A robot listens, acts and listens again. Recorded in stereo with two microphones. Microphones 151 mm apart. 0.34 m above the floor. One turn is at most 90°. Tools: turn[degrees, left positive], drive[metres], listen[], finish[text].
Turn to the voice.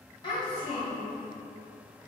Thought: The child speaking: about 35° left or 145° left.
Action: turn[35]
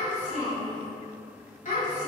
Thought: So it is at 110° left.
Action: turn[90]
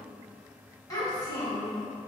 Thought: The child speaking is now 30° left.
Action: turn[30]
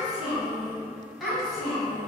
Action: finish[Facing the child speaking, 1 to 2 m away.]